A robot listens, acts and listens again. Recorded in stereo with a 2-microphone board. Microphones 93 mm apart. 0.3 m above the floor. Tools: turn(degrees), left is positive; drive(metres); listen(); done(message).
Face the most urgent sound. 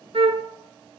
listen()
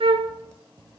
listen()
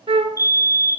turn(degrees=-30)
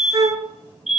done("Found it: a fire alarm, straight ahead, 2 to 4 m away.")